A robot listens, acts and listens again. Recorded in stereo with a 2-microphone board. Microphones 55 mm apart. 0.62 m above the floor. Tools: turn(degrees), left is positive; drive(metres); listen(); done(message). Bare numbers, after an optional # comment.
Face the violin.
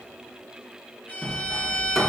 # The violin: about 45° left or 135° left.
turn(45)
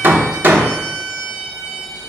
done("Found it: a violin, straight ahead.")